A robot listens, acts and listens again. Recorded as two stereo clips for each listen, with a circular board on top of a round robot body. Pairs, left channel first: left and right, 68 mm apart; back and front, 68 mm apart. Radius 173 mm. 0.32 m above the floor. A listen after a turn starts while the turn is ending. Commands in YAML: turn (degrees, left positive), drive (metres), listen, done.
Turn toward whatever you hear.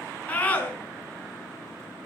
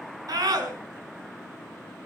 turn: 20
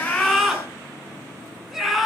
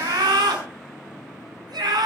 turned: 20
done: "Found it: a scream, straight ahead."